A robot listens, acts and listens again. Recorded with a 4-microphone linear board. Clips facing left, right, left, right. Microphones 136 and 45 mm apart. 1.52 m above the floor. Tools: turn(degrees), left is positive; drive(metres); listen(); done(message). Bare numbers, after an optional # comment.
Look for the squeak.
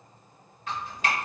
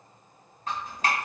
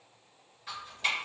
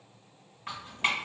listen()
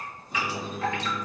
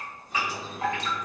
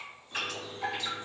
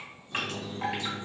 # The squeak: about 35° left or 145° left.
turn(35)
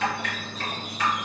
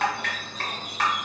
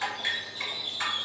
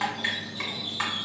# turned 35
done("Found it: a squeak, straight ahead, 1 to 2 m away.")